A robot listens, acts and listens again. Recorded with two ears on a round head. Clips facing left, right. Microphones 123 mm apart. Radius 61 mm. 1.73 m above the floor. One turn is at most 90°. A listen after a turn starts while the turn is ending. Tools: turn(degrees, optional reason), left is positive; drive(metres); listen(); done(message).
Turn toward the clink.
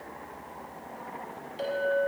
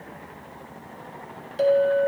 turn(degrees=-55, reason="The clink: about 55° right or 125° right.")
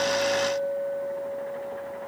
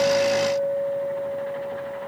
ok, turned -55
turn(degrees=-65, reason="So it is at 65° right.")
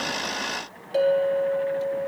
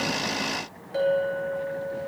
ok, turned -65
turn(degrees=30, reason="The clink is now 30° left.")
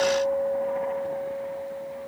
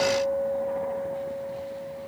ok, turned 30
turn(degrees=30, reason="The clink is now 30° left.")
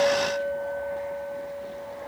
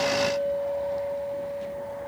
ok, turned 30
turn(degrees=-15, reason="The clink is now 15° right.")
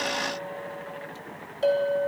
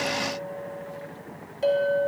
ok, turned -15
done("Found it: a clink, straight ahead.")